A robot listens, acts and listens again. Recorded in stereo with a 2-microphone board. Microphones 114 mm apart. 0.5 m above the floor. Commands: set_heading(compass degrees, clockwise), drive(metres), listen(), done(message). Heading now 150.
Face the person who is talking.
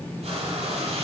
listen()
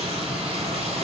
listen()
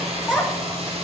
set_heading(120)
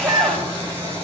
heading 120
set_heading(155)
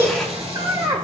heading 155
set_heading(195)
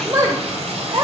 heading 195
set_heading(225)
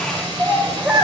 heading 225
set_heading(235)
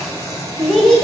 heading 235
done("Facing the child speaking, 1 to 2 m away.")